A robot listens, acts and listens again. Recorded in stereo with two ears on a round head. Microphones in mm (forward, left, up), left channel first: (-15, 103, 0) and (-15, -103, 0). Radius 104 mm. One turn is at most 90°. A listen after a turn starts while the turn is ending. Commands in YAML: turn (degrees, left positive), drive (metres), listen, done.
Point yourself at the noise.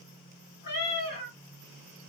turn: 50
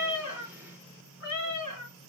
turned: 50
turn: 80
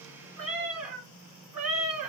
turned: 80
done: "Facing the cat meowing, 2 to 4 m away."